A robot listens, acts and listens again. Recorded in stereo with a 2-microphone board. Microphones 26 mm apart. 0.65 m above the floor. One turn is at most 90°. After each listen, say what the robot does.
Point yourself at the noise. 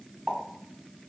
Turn 45° right.
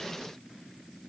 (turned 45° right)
Keep listening.
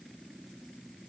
I heard a pop, but can't make it out now. It was about straight ahead or 90° right.